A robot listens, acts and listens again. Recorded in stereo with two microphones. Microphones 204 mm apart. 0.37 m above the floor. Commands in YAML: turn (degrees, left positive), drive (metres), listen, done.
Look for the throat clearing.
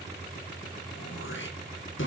turn: 90
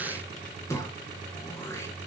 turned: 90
turn: 15
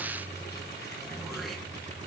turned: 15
listen: true
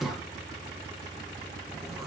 done: "Found it: throat clearing, straight ahead, 1 to 2 m away."